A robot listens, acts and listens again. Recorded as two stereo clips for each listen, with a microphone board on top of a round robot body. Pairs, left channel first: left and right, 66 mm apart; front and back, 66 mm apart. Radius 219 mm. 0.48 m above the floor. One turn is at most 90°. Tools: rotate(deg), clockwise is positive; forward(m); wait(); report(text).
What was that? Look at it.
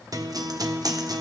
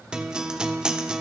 rotate(90)
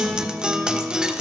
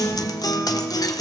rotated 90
rotate(15)
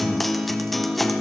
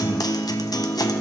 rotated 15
report("Facing the guitar, 1 to 2 m away.")